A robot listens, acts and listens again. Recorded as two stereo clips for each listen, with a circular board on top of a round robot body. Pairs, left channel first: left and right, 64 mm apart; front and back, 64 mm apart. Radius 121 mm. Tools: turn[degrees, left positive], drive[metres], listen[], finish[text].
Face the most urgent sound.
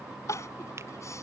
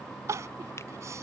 Thought: The crying: 135° left.
Action: turn[135]
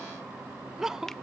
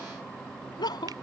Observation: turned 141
Action: finish[Found it: crying, straight ahead.]